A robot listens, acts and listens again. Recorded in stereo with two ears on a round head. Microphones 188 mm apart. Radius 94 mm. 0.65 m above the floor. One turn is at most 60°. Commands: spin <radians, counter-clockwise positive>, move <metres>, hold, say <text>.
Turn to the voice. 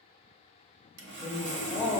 spin -0.35
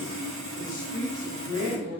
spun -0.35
spin -0.52
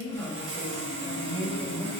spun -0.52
spin -0.26
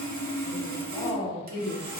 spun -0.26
spin -0.52
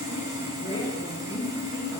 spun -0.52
spin 0.44
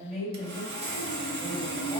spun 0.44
spin -0.17
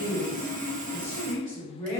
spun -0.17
say Facing the woman speaking, 2 to 4 m away.